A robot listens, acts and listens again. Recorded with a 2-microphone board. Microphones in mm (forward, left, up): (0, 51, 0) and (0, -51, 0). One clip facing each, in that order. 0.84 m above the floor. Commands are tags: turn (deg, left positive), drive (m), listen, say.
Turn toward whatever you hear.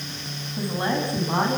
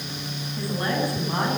<turn deg="25"/>
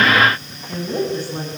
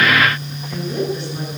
<turn deg="135"/>
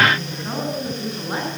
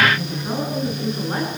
<say>Found it: a woman speaking, straight ahead, over 4 m away.</say>